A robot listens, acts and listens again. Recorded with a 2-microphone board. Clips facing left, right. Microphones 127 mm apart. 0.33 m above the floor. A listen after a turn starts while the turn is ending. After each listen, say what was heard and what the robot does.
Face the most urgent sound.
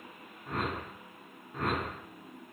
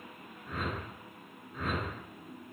Keep listening.
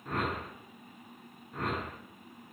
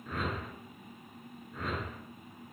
Keep listening.
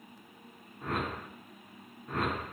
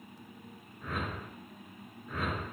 I can't make out anything urgent to turn to.